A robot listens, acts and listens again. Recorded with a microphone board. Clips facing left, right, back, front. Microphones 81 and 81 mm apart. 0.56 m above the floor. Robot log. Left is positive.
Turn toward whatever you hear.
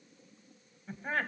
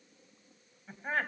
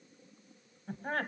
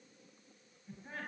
note: The laughter: 175° left.
cmd yaw +175
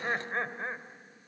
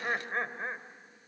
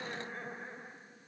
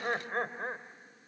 note: The laughter is now 10° right.
cmd yaw -10
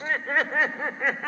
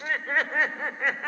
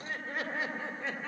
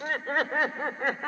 end: Found it: laughter, straight ahead.